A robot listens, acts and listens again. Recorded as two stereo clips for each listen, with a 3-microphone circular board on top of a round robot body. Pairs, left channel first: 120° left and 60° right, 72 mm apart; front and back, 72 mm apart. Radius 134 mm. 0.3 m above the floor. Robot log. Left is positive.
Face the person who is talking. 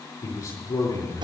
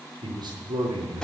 note: The man speaking: 155° left.
cmd yaw +155
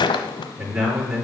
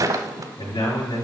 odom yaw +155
note: The man speaking is now 10° left.
cmd yaw +10
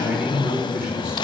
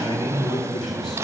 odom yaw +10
end: Found it: a man speaking, straight ahead.